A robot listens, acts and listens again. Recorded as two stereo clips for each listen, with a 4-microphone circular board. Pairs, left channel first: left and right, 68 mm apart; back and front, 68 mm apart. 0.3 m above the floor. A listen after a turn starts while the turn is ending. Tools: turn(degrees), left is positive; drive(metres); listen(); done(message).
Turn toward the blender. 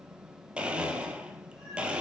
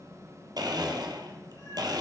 turn(degrees=-15)
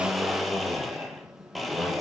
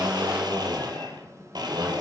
done("Found it: a blender, straight ahead.")